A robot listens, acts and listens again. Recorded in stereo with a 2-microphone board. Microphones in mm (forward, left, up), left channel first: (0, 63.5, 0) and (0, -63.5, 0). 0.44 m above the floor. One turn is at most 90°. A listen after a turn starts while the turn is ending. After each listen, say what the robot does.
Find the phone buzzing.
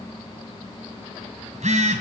Turn 75° right.
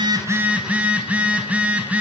Turn 10° right.
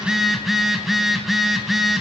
Found it: a phone buzzing, straight ahead.